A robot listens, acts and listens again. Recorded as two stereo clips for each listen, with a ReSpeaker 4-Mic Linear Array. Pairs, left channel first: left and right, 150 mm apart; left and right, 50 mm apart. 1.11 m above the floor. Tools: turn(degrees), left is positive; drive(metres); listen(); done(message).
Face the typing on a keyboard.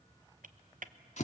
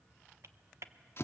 turn(degrees=-65)
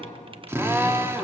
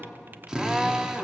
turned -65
listen()
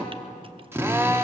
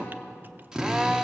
listen()
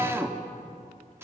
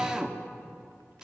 done("I heard typing on a keyboard, but can't make it out now. It was about straight ahead or 50° right.")